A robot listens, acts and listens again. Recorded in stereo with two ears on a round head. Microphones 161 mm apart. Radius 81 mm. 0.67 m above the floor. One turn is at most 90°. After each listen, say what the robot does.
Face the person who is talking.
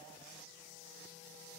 Keep listening.
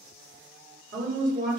Turn 50° right.
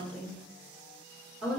Facing the woman speaking, 1 to 2 m away.